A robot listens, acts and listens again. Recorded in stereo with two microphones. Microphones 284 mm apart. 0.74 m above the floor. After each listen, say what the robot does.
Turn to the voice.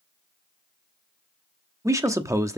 Turn 30° right.
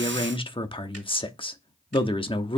Turn 20° left.
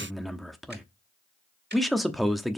Facing the man speaking, 1 to 2 m away.